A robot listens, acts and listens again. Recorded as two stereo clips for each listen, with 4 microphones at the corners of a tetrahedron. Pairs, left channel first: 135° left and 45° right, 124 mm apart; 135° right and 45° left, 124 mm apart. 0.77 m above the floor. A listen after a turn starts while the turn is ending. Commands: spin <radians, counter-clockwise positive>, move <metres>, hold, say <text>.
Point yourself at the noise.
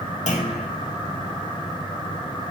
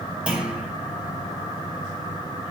spin 2.18
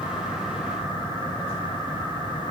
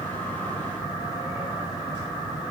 say Facing where the clunk came from. I can't hear it now.